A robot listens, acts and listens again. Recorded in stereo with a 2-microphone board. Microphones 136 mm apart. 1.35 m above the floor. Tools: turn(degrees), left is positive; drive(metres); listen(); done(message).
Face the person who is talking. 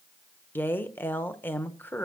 turn(degrees=30)
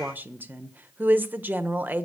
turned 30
turn(degrees=-15)
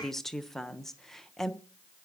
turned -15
done("Facing the woman speaking.")